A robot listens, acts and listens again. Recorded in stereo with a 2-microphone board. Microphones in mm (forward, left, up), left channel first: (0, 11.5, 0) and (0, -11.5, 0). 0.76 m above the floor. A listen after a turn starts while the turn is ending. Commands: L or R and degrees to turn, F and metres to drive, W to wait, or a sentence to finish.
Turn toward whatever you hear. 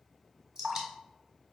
R30
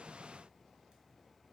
W
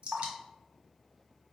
R120
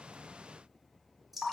Facing the dripping, 1 to 2 m away.